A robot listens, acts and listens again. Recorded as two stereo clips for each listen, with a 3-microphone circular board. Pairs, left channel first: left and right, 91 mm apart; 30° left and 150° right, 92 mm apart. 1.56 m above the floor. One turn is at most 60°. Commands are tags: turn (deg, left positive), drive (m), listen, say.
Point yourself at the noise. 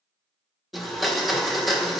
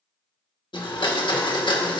<say>Facing the blender.</say>